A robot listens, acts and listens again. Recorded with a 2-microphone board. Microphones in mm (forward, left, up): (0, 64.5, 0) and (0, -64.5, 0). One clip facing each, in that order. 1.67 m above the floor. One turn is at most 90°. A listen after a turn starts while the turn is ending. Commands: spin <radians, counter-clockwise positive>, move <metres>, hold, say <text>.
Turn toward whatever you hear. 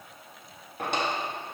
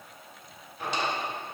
spin 1.13
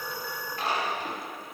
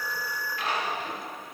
spin 0.70
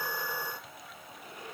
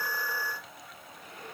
hold
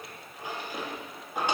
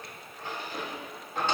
spin 0.26
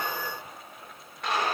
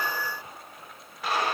say Found it: a drawer, straight ahead, 1 to 2 m away.